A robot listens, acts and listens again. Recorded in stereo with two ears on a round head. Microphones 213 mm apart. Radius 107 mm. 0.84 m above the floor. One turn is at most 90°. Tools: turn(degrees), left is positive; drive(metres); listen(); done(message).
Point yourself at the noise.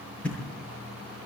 turn(degrees=30)
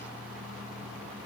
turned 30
listen()
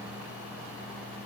done("I heard a thud, but can't make it out now. It was about 25° right or 145° left.")